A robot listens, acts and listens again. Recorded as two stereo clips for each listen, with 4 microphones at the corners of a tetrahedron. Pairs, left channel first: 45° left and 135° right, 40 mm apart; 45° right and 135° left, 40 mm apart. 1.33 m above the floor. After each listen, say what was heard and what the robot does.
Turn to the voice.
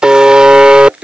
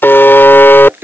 Keep listening.
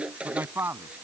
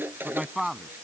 The man speaking: 145° right. Turn 145° right.
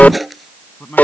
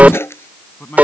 Found it: a man speaking, straight ahead.